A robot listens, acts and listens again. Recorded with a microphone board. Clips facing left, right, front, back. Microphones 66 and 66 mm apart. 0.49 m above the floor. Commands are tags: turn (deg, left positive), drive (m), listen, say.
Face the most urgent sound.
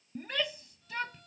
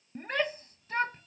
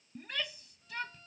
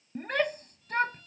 <turn deg="-140"/>
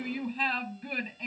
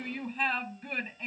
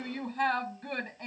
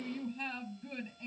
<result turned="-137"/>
<say>Facing the shout.</say>